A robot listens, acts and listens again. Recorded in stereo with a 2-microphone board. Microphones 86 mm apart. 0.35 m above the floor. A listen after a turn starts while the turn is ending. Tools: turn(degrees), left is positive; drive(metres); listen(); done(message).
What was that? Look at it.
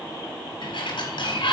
turn(degrees=75)
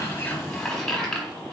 turn(degrees=10)
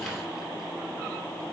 listen()
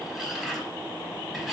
done("Found it: a sliding door, straight ahead.")